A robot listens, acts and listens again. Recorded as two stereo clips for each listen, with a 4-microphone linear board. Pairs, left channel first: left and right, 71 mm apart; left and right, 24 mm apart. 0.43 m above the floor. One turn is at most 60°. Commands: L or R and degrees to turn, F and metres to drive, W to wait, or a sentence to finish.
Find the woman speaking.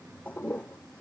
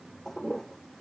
W
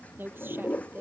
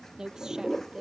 R30
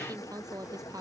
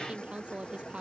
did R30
R60
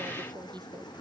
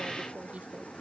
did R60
R60
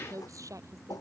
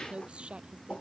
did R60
R50
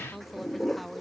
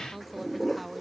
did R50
Facing the woman speaking.